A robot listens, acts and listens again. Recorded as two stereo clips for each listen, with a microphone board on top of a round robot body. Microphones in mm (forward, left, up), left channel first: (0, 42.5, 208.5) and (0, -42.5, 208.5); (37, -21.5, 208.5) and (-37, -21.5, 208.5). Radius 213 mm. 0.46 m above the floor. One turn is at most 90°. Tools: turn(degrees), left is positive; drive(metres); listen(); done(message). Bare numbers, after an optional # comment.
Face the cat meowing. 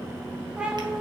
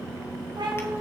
# The cat meowing: 170° right.
turn(-90)
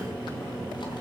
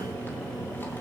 # Nothing new. It was at 80° right.
turn(-80)
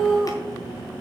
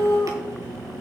done("Facing the cat meowing.")